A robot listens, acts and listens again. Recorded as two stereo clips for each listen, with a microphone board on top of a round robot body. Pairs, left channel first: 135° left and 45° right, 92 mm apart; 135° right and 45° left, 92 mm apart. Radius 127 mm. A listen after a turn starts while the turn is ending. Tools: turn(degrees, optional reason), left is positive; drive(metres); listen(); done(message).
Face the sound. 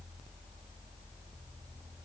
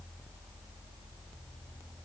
listen()
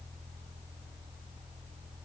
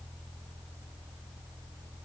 listen()
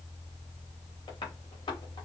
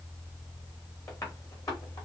turn(degrees=170, reason="The tapping: 170° left.")
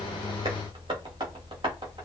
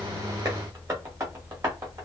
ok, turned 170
turn(degrees=-10, reason="The tapping is now 10° right.")
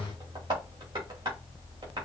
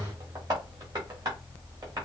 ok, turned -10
done("Facing the tapping, 2 to 4 m away.")